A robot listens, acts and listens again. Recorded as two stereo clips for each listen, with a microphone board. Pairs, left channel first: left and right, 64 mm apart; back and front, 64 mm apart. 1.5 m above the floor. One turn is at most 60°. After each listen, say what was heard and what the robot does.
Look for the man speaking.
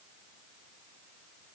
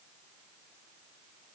Keep listening.
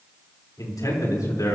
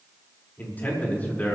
The man speaking: 115° left. Turn 60° left.
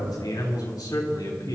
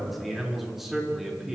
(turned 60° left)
The man speaking is now 85° left. Turn 60° left.
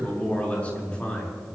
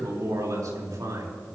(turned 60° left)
The man speaking is now 20° left. Turn 20° left.
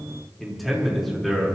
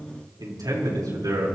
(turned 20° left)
Found it: a man speaking, straight ahead.